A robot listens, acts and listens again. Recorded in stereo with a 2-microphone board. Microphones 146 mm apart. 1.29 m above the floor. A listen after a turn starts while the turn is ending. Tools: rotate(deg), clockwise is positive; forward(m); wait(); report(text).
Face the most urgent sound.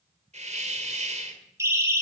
rotate(20)
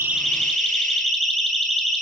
report("Found it: a siren, straight ahead.")